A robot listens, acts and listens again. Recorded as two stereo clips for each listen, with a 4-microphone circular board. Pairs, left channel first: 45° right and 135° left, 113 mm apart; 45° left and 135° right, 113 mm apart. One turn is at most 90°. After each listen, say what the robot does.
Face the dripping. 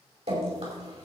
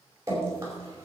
Turn 90° left.
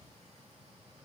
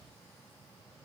Turn 70° left.
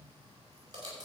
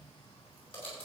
Turn 85° left.
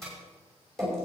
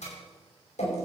Turn 40° left.
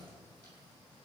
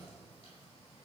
Keep listening.
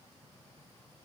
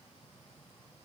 Keep listening.
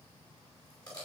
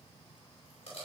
Turn 10° left.
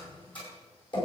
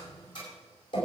Found it: dripping, straight ahead.